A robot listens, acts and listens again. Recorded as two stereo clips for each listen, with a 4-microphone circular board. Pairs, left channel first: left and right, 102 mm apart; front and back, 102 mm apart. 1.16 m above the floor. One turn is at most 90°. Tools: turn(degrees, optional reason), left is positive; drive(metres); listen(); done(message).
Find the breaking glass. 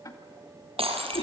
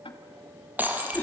turn(degrees=-90, reason="The breaking glass: 110° right.")
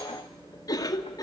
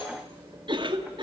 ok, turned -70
turn(degrees=-40, reason="Nothing new. It was at 40° right.")
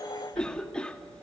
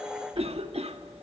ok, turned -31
done("I heard breaking glass from this way, but can't make it out now.")